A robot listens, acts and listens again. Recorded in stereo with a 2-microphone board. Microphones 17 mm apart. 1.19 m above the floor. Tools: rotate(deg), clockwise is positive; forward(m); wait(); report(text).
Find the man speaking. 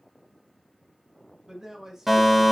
rotate(30)
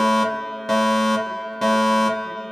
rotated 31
wait()
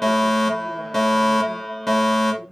rotate(-40)
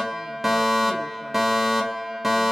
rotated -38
wait()
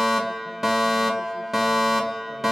wait()
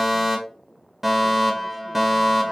report("I heard a man speaking from this way, but can't make it out now.")